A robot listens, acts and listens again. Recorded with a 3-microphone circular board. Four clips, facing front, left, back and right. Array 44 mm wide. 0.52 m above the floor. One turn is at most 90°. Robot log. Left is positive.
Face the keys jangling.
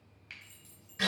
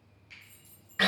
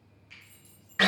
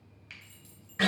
note: The keys jangling: 65° right.
cmd yaw -65
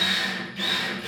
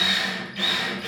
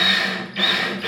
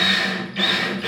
cmd idle
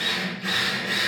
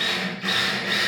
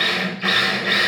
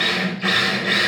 cmd idle
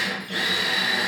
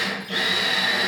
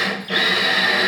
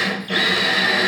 end: Facing where the keys jangling came from. I can't hear it now.